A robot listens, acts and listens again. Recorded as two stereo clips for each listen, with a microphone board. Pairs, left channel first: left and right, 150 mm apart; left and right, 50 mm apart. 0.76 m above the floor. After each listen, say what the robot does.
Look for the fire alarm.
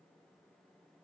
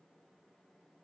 Keep listening.
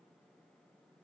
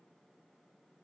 Keep listening.
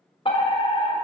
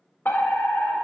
Turn 40° left.
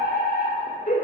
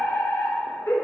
Turn 95° left.
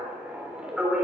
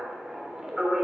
Found it: a fire alarm, straight ahead.